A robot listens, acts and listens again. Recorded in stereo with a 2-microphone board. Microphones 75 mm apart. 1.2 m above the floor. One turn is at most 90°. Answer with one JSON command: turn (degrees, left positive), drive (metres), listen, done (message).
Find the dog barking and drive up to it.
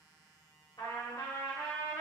{"listen": true}
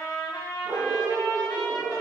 {"turn": -55}
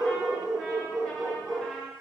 {"drive": 1.0}
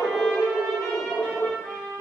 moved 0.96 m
{"drive": 1.0}
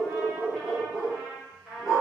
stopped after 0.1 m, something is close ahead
{"turn": -10}
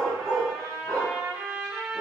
{"done": "I am next to the dog barking."}